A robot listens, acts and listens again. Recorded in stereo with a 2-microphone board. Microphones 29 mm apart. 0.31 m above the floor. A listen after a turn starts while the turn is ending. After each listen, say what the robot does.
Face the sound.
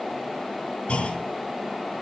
Turn 40° left.
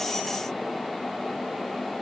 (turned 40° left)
Keep listening.
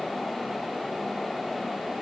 I heard a clunk, but can't make it out now. It was about straight ahead or 100° left.